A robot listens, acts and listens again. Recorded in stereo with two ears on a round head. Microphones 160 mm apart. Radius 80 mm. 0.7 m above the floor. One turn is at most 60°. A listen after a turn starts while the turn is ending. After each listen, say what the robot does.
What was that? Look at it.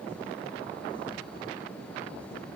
Keep listening.
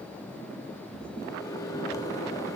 Turn 20° left.
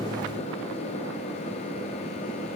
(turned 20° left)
Turn 60° left.
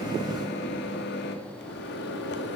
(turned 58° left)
Turn 60° left.
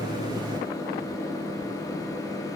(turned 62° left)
Turn 20° left.
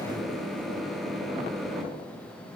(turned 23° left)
Found it: a microwave, straight ahead.